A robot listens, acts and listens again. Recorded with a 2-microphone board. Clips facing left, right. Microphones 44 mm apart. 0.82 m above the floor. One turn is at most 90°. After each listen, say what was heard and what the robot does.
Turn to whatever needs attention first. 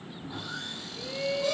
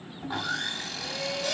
The shout: about 15° left or 165° left. Turn 15° left.
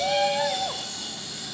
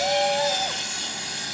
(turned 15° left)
Found it: a shout, straight ahead.